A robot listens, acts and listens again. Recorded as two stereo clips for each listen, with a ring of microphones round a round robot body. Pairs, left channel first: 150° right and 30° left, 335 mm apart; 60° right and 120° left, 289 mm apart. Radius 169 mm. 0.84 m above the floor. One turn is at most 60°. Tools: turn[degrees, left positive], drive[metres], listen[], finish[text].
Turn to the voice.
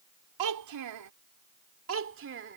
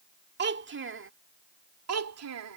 Thought: The child speaking: 90° left.
Action: turn[60]
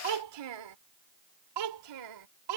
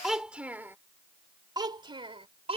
Thought: The child speaking is now 50° left.
Action: turn[50]
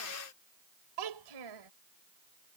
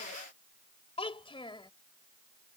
Thought: The child speaking is now 15° left.
Action: turn[15]
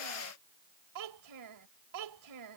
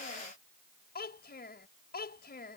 Action: finish[Facing the child speaking.]